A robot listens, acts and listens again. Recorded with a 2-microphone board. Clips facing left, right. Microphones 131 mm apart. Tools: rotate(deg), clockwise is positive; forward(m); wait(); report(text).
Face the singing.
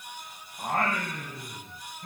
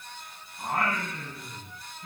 rotate(-55)
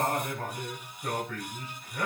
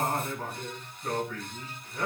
rotate(-75)
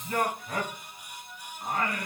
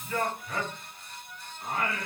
rotate(-40)
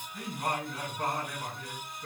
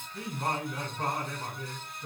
report("Facing the singing.")